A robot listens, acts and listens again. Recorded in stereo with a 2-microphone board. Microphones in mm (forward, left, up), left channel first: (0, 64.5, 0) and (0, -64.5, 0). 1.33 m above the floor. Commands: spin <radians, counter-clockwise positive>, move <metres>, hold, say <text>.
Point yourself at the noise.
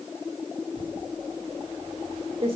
spin -0.87
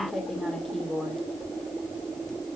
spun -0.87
say Facing the typing on a keyboard, 2 to 4 m away.